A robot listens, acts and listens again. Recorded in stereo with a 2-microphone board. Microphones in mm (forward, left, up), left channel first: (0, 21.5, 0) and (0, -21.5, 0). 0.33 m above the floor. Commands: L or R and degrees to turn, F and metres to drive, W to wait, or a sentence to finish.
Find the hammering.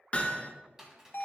L30
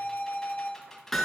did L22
Facing the hammering, 1 to 2 m away.